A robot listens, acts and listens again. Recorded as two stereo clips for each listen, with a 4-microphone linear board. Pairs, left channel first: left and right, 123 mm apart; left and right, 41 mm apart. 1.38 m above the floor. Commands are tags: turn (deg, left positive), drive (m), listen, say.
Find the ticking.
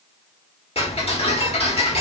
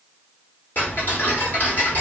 <turn deg="55"/>
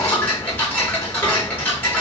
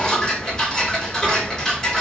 <turn deg="15"/>
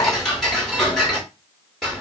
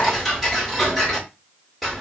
<say>Facing the ticking, 1 to 2 m away.</say>